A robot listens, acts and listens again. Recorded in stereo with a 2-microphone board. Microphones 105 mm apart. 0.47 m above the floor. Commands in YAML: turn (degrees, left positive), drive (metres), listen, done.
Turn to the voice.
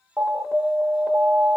listen: true
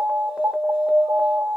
listen: true
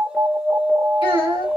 turn: 55
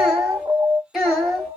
done: "Found it: a child speaking, straight ahead."